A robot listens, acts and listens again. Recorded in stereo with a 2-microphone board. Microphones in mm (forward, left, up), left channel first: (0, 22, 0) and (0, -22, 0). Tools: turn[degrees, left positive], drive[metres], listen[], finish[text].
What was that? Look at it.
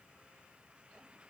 Action: listen[]
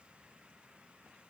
Action: listen[]
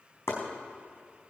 Action: turn[90]
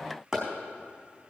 Thought: So it is at 10° right.
Action: turn[-10]
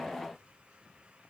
Action: listen[]
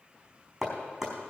Action: finish[Facing the chopping, over 4 m away.]